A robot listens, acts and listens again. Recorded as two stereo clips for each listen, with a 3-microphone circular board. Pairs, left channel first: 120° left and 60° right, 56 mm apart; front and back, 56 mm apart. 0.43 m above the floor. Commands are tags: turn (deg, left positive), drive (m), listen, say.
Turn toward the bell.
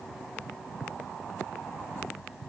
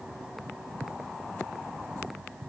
<listen/>
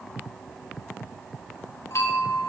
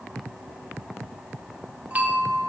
<turn deg="125"/>
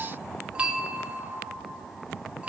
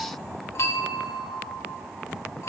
<say>Found it: a bell, straight ahead.</say>